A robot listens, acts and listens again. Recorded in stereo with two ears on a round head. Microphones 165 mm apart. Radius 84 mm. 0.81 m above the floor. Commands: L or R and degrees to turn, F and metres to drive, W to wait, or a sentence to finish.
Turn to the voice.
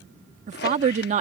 R40
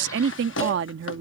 R100
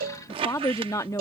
L15
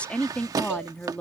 Found it: a woman speaking, straight ahead.